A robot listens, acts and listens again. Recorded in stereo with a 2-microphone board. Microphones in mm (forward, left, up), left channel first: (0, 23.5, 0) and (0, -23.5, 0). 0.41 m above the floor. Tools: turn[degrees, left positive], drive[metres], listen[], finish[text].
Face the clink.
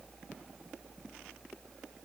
Action: listen[]
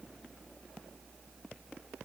Action: listen[]
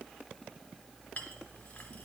Thought: The clink: about 40° left or 140° left.
Action: turn[40]
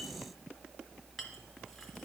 Action: listen[]
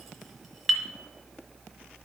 Action: finish[Found it: a clink, straight ahead.]